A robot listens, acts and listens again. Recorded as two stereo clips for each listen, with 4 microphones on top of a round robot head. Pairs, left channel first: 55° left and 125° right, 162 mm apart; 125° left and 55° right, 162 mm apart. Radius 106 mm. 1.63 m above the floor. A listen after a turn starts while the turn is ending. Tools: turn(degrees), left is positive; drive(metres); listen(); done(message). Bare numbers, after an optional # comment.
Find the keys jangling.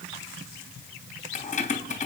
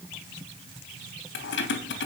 # The keys jangling: 105° left.
turn(105)
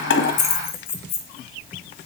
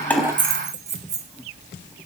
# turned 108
done("Found it: keys jangling, straight ahead.")